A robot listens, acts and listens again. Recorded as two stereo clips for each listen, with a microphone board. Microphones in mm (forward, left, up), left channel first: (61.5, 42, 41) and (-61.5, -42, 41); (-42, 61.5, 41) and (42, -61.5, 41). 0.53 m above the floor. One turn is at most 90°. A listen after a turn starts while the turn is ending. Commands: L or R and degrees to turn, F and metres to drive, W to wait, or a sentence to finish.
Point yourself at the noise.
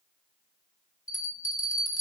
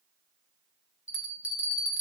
L25
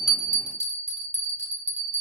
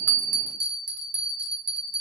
Found it: a bell, straight ahead, 1 to 2 m away.